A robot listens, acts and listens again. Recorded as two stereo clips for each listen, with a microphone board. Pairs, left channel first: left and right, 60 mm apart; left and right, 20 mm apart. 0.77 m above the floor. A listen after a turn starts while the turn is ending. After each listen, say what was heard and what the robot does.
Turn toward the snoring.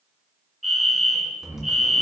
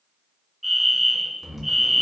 The snoring: about 55° right or 125° right. Turn 55° right.
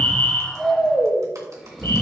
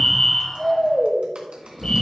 Facing the snoring, 2 to 4 m away.